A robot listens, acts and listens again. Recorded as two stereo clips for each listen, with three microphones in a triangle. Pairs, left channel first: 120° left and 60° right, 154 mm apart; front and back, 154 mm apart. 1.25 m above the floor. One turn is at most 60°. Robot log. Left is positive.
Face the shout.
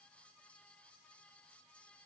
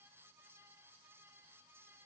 cmd idle
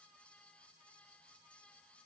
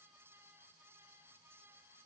cmd idle
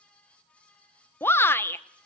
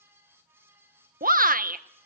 note: The shout: 165° right.
cmd yaw -60
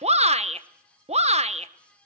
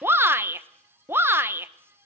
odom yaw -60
note: The shout is now 105° right.
cmd yaw -60
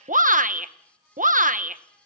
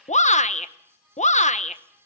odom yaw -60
note: The shout is now 35° right.
cmd yaw -35
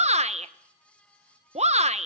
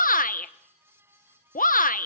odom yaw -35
note: The shout is now 20° right.
cmd yaw -20
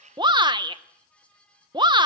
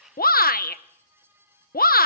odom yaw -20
end: Facing the shout, under 1 m away.